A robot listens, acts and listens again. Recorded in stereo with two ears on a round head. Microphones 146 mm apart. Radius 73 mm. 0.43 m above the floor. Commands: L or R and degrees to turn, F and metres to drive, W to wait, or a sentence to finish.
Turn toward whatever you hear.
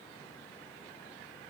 W
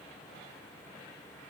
W
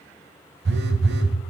R75
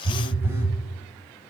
R15
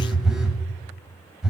Facing the phone buzzing, 1 to 2 m away.